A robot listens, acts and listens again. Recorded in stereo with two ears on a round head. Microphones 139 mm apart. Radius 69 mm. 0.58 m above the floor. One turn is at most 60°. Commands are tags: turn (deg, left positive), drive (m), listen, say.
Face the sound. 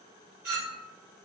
<turn deg="-60"/>
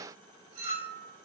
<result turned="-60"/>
<turn deg="-50"/>
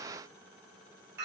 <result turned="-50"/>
<turn deg="-15"/>
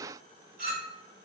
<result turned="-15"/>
<say>Facing the clink, 2 to 4 m away.</say>